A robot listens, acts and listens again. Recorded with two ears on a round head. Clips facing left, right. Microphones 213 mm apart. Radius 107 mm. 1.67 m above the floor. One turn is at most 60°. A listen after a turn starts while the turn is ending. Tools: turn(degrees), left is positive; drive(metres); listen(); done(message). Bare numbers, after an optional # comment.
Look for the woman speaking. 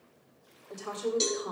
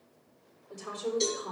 # The woman speaking: about 40° left or 140° left.
turn(40)
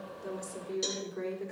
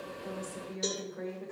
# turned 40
# So it is at 95° left.
turn(60)
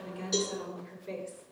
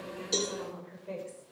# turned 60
# The woman speaking is now 30° left.
turn(30)
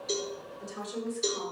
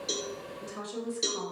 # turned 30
# The woman speaking is now 20° right.
turn(-20)
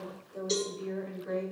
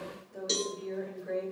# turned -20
done("Facing the woman speaking.")